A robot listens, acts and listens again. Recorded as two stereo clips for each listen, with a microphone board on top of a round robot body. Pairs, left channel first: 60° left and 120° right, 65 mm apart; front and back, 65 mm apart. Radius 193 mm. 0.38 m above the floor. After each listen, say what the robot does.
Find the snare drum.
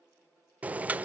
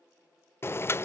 Keep listening.
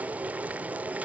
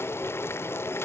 Keep listening.
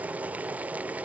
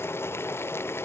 I can't make out a snare drum, only boiling.